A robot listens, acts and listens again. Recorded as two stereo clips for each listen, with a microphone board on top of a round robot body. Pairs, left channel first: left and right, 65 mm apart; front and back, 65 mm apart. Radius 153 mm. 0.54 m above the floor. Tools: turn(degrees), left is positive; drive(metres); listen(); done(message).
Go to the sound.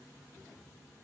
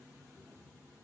listen()
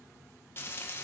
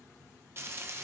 turn(degrees=135)
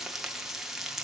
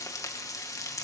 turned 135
turn(degrees=-10)
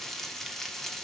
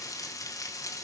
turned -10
drive(metres=1.0)
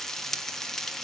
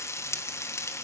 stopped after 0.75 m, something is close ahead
done("I am next to the frying.")